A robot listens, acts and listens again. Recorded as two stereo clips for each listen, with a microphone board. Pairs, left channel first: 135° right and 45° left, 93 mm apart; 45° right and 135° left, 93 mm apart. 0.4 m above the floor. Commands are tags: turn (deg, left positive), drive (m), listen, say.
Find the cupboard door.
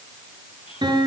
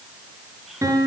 <listen/>
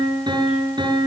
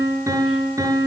<listen/>
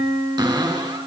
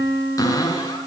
<say>Found it: a cupboard door, straight ahead.</say>